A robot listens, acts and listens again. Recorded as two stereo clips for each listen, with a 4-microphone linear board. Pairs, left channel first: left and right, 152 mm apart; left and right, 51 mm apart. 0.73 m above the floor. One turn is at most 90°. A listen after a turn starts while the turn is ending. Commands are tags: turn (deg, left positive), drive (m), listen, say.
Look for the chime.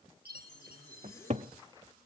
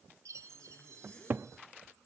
<turn deg="-90"/>
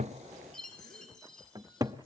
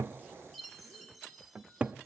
<say>Facing the chime.</say>